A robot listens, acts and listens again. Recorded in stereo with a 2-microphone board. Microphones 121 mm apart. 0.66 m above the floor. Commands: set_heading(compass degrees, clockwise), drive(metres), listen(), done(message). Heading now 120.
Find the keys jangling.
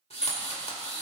set_heading(150)
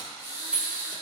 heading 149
set_heading(179)
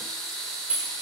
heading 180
set_heading(210)
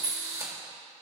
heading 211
set_heading(1)
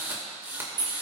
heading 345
set_heading(25)
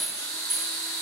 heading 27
done("Facing the keys jangling, 2 to 4 m away.")